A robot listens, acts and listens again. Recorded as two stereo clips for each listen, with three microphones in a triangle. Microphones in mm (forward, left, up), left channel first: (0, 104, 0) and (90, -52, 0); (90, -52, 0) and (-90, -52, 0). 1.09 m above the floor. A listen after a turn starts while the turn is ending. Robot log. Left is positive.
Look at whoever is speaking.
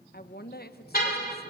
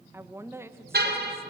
note: The woman speaking: 105° left.
cmd yaw +105
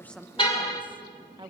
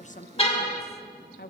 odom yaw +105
end: Facing the woman speaking.